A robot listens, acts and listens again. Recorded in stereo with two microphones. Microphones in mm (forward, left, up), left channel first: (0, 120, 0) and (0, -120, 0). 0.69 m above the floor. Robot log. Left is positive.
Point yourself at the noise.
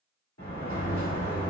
cmd yaw +90
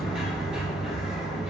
end: Facing the sliding door.